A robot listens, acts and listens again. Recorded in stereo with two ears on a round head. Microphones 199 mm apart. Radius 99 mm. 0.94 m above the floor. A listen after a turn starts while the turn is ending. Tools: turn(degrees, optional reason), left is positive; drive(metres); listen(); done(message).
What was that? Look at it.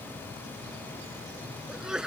turn(degrees=-30)
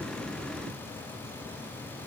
listen()
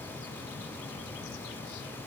done("I heard a sneeze, but can't make it out now. It was about 25° left or 145° right.")